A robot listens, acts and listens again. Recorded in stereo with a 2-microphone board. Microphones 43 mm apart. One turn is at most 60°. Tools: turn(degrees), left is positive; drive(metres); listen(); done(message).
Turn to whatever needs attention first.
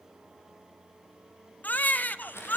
turn(degrees=45)
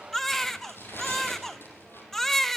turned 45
turn(degrees=10)
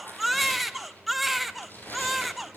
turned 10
done("Found it: a baby crying, straight ahead.")